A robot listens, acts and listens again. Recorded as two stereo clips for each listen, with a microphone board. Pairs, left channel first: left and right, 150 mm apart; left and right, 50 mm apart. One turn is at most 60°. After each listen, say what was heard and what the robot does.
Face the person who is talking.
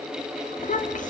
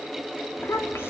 The child speaking: about 60° left or 120° left. Turn 60° left.
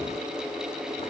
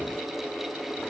Keep listening.
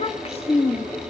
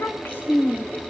So it is at 50° left. Turn 50° left.
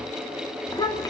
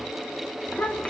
The child speaking is now 30° left. Turn 30° left.
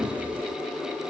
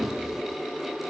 Keep listening.
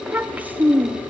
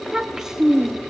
The child speaking is now 10° right. Turn 10° right.
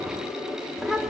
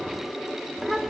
Found it: a child speaking, straight ahead, 1 to 2 m away.